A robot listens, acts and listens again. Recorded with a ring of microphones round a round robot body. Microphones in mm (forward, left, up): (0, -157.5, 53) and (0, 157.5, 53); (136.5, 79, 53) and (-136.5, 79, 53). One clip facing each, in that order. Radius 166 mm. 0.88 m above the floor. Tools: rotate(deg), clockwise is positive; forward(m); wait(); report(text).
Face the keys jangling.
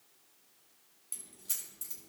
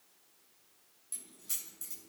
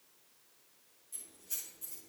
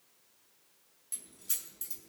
rotate(-180)
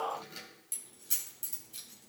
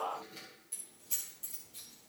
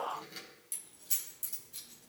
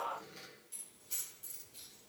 rotate(40)
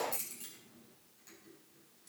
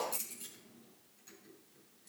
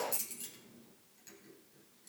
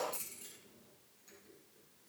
report("Facing the keys jangling.")